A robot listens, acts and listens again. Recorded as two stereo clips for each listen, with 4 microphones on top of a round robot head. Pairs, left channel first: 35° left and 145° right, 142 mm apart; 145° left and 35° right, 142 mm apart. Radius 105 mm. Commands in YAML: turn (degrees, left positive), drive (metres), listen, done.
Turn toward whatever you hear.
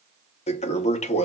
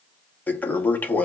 turn: 70
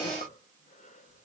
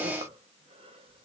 listen: true
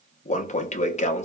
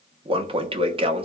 turn: 10
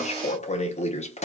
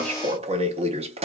done: "Facing the toilet flushing, under 1 m away."